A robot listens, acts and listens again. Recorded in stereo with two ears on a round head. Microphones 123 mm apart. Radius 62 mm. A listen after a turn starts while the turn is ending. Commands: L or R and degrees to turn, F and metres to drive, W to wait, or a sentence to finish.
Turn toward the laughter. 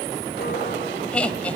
L30
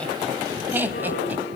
R15
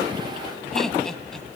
Found it: laughter, straight ahead, 2 to 4 m away.